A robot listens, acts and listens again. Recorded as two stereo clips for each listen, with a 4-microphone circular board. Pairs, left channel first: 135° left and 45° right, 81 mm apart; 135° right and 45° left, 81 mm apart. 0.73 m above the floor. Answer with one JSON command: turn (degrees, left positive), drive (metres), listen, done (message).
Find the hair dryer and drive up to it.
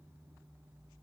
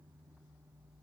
{"listen": true}
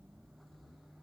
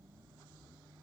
{"listen": true}
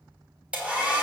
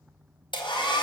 {"turn": -120}
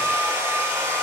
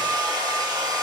{"turn": 15}
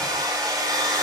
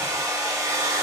{"drive": 1.0}
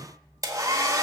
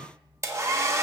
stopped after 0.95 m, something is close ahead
{"done": "I am next to the hair dryer."}